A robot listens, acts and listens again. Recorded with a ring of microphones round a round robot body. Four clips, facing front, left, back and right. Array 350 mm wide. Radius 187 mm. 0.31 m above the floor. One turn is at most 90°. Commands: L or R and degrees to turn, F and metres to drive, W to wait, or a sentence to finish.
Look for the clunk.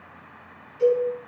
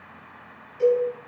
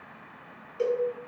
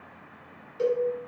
W
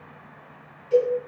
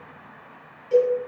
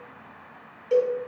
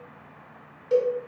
W
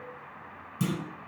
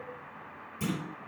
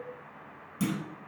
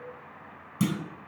R90
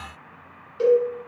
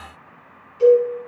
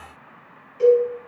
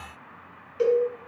I heard a clunk from this way, but can't make it out now.